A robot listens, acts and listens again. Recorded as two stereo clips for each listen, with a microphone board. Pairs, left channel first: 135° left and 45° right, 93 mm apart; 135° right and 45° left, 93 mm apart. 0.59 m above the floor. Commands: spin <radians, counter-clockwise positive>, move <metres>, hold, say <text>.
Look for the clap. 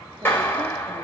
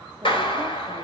spin -2.71
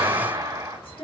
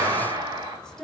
say Found it: a clap, straight ahead.